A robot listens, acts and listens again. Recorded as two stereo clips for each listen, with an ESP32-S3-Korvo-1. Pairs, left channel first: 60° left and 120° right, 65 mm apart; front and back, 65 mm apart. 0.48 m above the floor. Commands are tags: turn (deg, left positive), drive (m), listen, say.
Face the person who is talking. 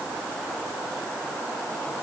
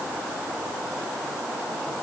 <listen/>
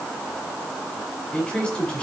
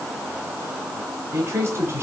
<turn deg="135"/>
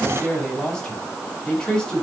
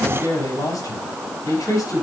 <turn deg="-15"/>
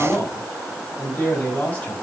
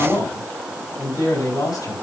<say>Found it: a man speaking, straight ahead.</say>